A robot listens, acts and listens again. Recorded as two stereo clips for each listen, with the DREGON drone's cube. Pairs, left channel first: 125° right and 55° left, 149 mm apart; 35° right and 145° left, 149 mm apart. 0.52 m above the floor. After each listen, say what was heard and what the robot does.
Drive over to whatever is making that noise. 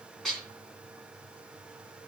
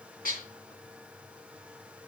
The dishes clattering: 35° right. Turn 35° right.
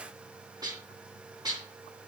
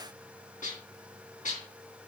Drive 1.0 m forward.
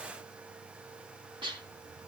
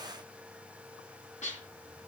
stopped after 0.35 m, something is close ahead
Blocked. The dishes clattering is further on, straight ahead.